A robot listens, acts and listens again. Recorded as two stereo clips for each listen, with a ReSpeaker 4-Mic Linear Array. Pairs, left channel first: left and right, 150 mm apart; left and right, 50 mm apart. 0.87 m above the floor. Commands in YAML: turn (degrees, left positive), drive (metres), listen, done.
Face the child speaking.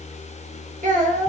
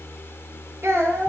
turn: -60
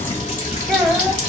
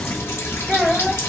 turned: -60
done: "Facing the child speaking, under 1 m away."